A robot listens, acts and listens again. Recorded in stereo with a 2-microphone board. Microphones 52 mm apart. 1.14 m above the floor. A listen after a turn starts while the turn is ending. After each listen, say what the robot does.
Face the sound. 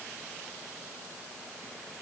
Keep listening.
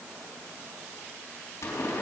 Turn 75° left.
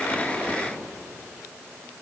Keep listening.
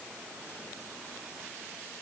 I heard a pop, but can't make it out now. It was about straight ahead or 30° left.